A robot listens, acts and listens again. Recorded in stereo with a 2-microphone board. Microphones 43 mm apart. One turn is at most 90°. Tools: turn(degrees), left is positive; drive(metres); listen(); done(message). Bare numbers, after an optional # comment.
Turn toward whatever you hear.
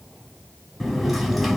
turn(-30)
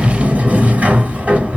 # So it is at 145° right.
turn(-90)
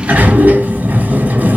# The sliding door is now 40° right.
turn(-40)
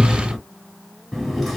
done("Found it: a sliding door, straight ahead, 1 to 2 m away.")